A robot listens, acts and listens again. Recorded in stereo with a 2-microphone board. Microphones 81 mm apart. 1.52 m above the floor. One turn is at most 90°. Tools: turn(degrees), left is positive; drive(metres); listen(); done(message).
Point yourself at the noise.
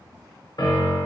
turn(degrees=60)
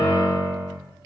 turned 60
turn(degrees=40)
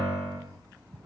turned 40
done("Found it: a piano, straight ahead, under 1 m away.")